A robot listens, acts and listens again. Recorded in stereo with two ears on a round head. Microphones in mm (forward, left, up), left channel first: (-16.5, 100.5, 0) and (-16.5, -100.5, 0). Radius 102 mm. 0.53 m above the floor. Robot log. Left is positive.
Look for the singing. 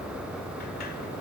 cmd idle
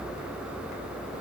cmd idle
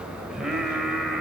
cmd yaw +30
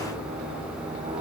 cmd idle
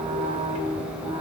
note: So it is at 20° right.
cmd yaw -20
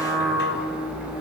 end: Found it: singing, straight ahead, over 4 m away.